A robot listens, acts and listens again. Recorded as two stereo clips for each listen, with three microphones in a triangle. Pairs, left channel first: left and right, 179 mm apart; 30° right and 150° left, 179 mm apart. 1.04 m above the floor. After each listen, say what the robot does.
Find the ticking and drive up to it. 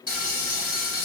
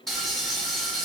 Keep listening.
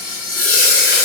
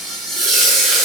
Keep listening.
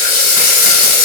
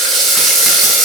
I can't make out ticking, only frying.